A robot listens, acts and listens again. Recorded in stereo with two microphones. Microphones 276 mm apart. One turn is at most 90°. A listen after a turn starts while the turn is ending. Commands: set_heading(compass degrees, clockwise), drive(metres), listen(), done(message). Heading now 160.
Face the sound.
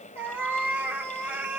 set_heading(190)
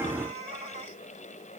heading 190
set_heading(280)
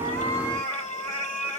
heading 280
set_heading(10)
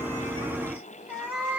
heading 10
done("Facing the cat meowing.")